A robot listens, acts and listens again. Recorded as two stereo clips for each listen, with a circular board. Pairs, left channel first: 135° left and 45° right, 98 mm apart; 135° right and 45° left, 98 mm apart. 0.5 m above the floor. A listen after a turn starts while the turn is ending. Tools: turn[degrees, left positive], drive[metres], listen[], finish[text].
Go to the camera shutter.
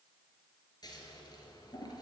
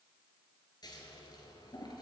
Action: listen[]
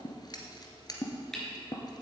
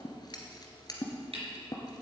Thought: The camera shutter: 50° left.
Action: turn[50]
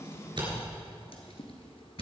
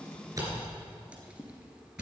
Thought: The camera shutter is now 10° right.
Action: turn[-10]
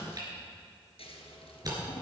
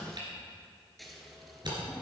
Action: drive[1.0]
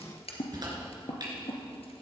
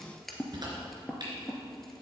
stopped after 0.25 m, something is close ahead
Action: finish[Blocked. The camera shutter is further on, straight ahead.]